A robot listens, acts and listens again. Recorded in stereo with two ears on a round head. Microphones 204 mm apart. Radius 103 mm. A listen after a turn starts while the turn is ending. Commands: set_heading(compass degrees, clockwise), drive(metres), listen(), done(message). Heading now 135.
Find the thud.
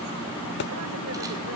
set_heading(85)
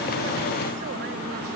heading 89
listen()
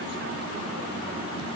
done("I heard a thud, but can't make it out now. It was about 5° left or 85° left.")